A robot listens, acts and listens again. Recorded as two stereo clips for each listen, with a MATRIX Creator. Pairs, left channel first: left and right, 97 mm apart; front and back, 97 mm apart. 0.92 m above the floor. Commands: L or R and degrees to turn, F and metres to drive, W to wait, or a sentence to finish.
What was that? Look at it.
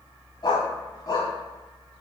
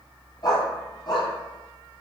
L40
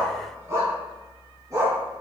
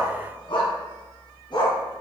R35
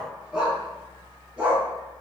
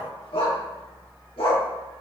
R10
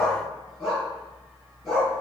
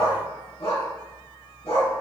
Facing the dog barking, over 4 m away.